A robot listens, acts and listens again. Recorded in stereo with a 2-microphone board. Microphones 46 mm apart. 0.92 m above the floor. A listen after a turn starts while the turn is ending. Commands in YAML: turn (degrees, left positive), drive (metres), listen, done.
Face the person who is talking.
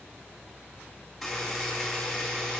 listen: true
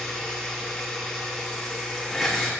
listen: true
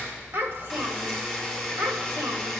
turn: -90
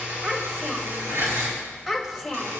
done: "Facing the child speaking, 2 to 4 m away."